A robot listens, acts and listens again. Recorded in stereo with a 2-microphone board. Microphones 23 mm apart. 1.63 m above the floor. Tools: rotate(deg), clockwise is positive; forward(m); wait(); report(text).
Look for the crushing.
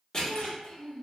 rotate(-30)
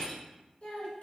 rotate(-120)
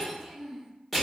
report("Facing the crushing, 1 to 2 m away.")